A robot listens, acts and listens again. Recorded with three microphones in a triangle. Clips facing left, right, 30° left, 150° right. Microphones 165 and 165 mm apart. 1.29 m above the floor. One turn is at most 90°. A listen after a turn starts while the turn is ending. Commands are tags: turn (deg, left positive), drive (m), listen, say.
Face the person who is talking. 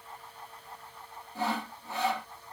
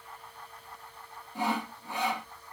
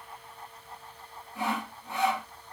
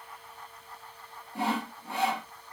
<listen/>
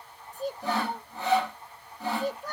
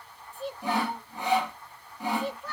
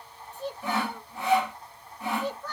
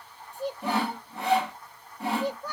<turn deg="90"/>
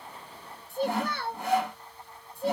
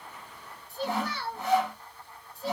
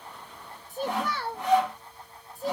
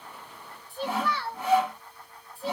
<turn deg="65"/>
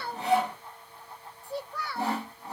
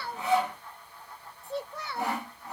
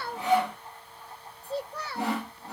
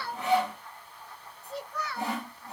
<turn deg="-25"/>
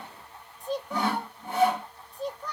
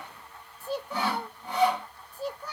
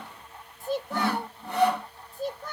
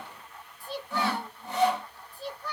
<turn deg="-10"/>
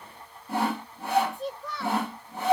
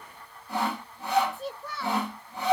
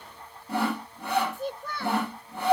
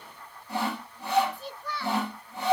<say>Found it: a child speaking, straight ahead, under 1 m away.</say>